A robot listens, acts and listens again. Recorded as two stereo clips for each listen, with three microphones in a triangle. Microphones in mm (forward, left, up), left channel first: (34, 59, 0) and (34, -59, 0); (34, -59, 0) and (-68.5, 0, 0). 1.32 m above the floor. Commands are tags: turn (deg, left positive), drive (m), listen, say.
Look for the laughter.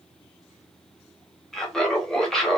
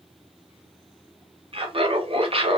<turn deg="175"/>
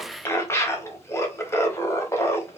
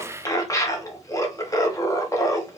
<turn deg="25"/>
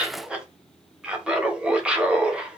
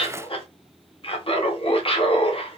<turn deg="-10"/>
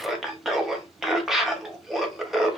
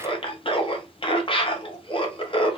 <say>Facing the laughter.</say>